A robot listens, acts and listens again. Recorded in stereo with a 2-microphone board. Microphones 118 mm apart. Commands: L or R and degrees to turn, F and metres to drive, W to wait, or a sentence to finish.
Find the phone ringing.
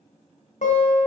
W
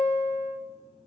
W
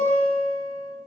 I can't make out a phone ringing, only a guitar.